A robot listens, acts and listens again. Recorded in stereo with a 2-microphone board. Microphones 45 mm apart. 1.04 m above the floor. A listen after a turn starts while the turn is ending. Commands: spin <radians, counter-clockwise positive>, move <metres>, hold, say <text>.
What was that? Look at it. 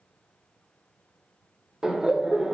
spin -0.35
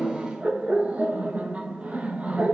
spin -2.53
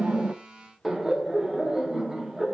spin -0.17
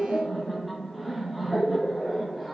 say Found it: laughter, straight ahead, under 1 m away.